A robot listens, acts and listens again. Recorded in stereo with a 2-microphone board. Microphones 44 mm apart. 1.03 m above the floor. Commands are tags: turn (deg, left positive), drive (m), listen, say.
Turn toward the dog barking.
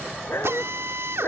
<turn deg="70"/>
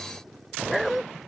<say>Facing the dog barking.</say>